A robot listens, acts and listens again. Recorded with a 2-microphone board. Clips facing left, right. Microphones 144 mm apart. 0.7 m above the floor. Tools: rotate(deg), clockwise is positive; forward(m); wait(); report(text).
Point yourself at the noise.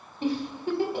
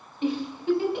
rotate(-40)
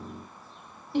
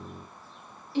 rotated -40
rotate(-95)
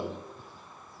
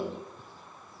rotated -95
wait()
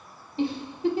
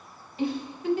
rotate(-35)
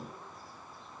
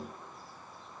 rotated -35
wait()
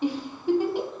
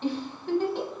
rotate(-15)
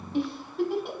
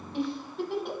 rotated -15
report("Facing the giggle.")